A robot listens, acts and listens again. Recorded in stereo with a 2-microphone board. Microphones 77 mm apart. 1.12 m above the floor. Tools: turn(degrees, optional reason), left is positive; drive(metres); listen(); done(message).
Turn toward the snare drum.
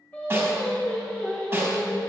turn(degrees=-30, reason="The snare drum: about 30° right or 150° right.")
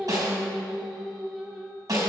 turn(degrees=-120, reason="So it is at 120° right.")
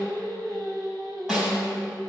done("Found it: a snare drum, straight ahead, 2 to 4 m away.")